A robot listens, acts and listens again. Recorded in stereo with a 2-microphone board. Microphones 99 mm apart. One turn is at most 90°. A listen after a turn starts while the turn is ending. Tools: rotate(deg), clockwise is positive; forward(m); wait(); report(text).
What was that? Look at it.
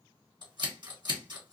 rotate(50)
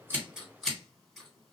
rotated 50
report("Facing the scissors, 1 to 2 m away.")